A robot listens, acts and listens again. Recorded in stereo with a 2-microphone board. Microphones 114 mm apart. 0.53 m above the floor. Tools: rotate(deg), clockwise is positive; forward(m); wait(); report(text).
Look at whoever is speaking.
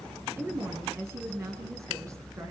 rotate(25)
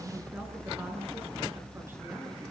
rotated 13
wait()
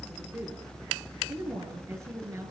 rotate(25)
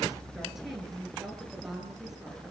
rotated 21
report("Found it: a woman speaking, straight ahead, over 4 m away.")